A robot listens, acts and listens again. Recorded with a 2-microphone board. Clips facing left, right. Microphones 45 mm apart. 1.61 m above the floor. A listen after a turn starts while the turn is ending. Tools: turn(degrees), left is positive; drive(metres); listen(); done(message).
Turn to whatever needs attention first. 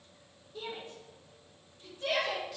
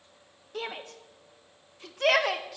turn(degrees=-70)
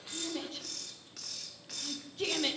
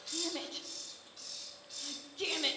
done("Found it: a shout, straight ahead, under 1 m away.")